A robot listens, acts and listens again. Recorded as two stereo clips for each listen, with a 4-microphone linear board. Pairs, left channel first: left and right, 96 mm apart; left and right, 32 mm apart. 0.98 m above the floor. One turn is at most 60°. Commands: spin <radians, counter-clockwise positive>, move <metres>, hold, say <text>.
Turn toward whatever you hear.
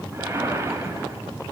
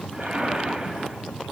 spin -0.52
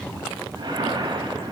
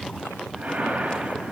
spin -1.05
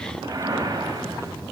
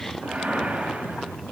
spin -1.05
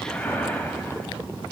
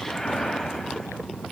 spin 0.26
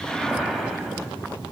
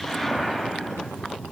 say Facing the whoosh.